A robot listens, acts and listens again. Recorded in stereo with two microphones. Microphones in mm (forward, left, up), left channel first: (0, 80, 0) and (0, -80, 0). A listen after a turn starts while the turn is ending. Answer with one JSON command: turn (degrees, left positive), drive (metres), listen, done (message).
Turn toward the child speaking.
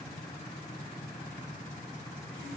{"listen": true}
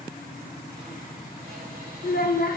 {"turn": 70}
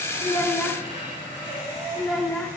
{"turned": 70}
{"done": "Found it: a child speaking, straight ahead."}